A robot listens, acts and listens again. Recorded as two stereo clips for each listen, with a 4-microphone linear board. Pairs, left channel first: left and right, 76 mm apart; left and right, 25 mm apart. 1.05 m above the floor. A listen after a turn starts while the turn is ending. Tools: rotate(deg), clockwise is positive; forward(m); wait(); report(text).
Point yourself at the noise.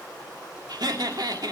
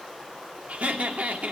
rotate(70)
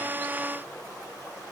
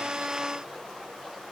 wait()
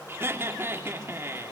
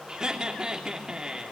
rotate(35)
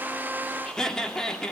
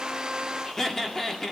rotate(-10)
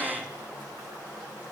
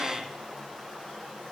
wait()
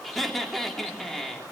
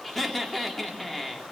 report("Facing the laughter.")